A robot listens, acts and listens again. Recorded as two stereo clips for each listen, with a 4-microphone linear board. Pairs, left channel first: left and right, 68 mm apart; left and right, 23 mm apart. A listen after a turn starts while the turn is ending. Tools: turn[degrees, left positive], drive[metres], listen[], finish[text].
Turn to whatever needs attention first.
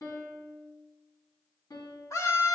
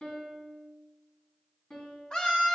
Thought: The scream: about 50° left or 130° left.
Action: turn[50]
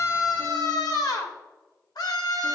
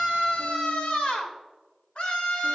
Thought: So it is at 80° left.
Action: turn[80]
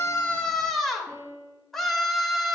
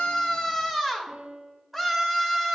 Action: finish[Facing the scream.]